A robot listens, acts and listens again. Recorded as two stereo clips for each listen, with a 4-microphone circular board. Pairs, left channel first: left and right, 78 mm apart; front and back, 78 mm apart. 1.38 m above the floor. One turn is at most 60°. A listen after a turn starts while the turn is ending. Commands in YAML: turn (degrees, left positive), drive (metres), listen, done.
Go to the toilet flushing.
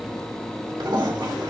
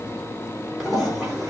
turn: -60
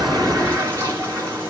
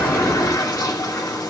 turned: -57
turn: -35
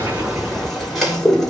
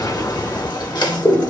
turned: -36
drive: 1.0
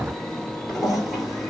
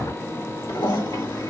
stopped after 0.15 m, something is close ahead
done: "Blocked. The toilet flushing is further on, straight ahead."